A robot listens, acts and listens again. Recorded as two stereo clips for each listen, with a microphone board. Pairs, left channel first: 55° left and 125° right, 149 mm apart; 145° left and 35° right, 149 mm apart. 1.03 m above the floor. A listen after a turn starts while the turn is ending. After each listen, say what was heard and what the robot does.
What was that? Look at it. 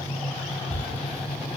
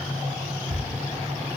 The thud: 40° right. Turn 40° right.
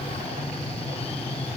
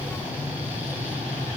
I heard a thud from this way, but can't make it out now.